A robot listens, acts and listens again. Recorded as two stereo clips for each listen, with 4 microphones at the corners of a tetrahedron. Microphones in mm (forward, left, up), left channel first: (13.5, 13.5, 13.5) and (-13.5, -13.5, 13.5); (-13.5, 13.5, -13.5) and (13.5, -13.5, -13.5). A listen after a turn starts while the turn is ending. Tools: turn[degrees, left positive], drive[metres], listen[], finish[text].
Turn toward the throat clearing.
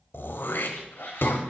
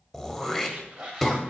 Thought: The throat clearing: 50° left.
Action: turn[50]
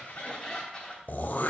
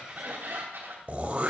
Action: finish[Facing the throat clearing, under 1 m away.]